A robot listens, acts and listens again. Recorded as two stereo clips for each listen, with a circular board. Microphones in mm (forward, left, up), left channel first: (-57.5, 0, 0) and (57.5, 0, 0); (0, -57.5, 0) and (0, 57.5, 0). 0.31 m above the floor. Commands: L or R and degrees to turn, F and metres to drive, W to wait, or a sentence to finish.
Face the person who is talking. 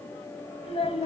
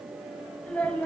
R165
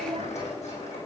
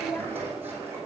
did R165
R20
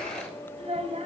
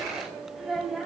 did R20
Facing the child speaking.